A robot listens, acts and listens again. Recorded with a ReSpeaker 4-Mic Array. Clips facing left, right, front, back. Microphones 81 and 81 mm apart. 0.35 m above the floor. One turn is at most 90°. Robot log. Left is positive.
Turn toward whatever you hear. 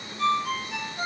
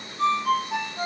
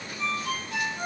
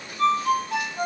note: The ringtone: 140° right.
cmd yaw -90
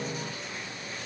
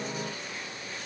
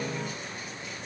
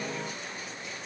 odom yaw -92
note: Nothing new. It was at 50° right.
cmd yaw -50
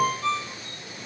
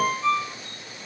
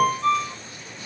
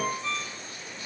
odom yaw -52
end: Facing the ringtone.